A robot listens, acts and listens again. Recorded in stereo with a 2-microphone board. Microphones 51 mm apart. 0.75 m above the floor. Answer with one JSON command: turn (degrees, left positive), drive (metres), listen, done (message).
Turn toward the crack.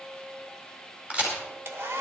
{"turn": -20}
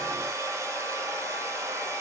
{"listen": true}
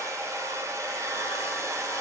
{"done": "I heard a crack, but can't make it out now. It was about straight ahead or 140° right."}